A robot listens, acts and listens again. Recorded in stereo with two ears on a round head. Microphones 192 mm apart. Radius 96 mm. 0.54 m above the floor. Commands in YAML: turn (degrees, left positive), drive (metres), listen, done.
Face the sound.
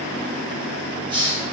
turn: -25
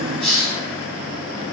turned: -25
done: "Found it: a hiss, straight ahead."